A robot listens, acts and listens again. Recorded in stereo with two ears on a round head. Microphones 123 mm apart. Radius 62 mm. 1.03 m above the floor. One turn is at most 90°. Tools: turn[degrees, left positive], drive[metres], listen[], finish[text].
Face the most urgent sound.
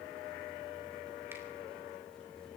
Action: listen[]
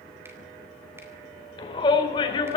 Thought: The shout: about 35° left or 145° left.
Action: turn[35]
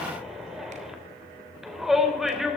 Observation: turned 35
Action: finish[Found it: a shout, straight ahead, 2 to 4 m away.]